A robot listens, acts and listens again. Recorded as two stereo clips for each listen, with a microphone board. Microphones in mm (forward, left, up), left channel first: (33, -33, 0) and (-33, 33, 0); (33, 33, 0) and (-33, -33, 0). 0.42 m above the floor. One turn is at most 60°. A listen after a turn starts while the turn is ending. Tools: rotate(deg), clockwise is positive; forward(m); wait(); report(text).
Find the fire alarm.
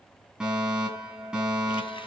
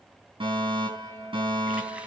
rotate(60)
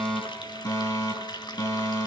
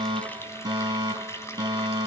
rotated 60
rotate(60)
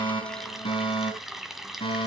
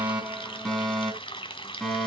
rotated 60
rotate(35)
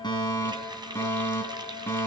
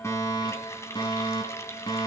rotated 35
rotate(-15)
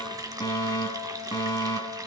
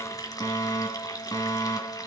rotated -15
report("Facing the fire alarm, over 4 m away.")